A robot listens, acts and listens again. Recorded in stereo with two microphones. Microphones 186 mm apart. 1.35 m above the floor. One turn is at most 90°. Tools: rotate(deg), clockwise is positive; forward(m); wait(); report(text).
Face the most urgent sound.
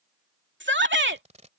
rotate(90)
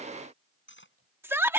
rotate(10)
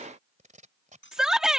report("Found it: a shout, straight ahead.")